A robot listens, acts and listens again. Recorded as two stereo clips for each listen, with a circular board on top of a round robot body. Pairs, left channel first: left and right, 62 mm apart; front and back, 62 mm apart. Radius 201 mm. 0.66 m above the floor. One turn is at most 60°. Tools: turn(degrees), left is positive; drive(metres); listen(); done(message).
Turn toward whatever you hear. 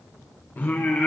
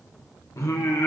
turn(degrees=25)
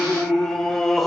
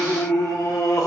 done("Found it: singing, straight ahead.")